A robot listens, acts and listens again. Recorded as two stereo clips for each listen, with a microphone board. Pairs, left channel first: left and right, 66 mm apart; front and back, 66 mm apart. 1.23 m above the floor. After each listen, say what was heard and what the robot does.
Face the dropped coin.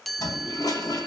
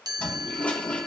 Keep listening.
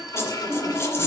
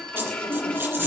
The dropped coin: 130° left. Turn 130° left.
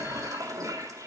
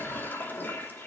I heard a dropped coin from this way, but can't make it out now.